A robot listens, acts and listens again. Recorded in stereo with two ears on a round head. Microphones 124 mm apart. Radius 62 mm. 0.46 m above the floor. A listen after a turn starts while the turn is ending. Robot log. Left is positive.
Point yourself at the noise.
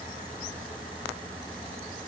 cmd idle
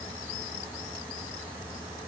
cmd idle
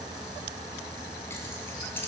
note: The keys jangling: about 15° left or 165° left.
cmd yaw +15
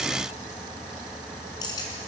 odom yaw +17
note: The keys jangling: about 30° left or 150° left.
cmd yaw +30
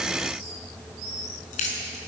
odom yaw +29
note: So it is at 120° left.
cmd yaw +120
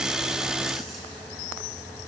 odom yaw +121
cmd idle
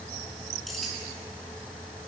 cmd idle
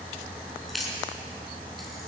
end: Facing the keys jangling, over 4 m away.